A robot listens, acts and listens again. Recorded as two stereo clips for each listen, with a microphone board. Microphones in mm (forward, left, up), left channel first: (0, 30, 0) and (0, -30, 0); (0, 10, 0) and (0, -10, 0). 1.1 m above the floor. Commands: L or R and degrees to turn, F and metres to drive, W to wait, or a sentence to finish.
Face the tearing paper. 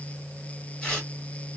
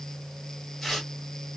L15
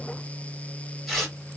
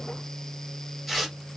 Found it: tearing paper, straight ahead, 1 to 2 m away.